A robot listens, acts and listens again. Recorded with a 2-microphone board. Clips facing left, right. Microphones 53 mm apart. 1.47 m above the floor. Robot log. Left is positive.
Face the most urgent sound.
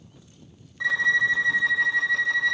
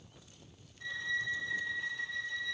cmd idle
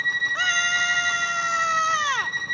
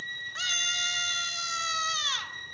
note: The scream: about 35° left or 145° left.
cmd yaw +35
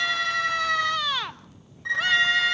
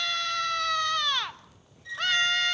end: Found it: a scream, straight ahead, 1 to 2 m away.